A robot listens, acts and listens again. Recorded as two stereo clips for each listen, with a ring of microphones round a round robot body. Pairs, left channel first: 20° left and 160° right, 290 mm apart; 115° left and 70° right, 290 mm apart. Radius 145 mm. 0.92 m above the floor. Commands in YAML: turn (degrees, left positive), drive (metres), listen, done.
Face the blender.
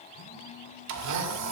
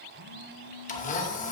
turn: 175
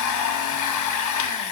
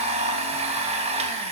done: "Facing the blender, under 1 m away."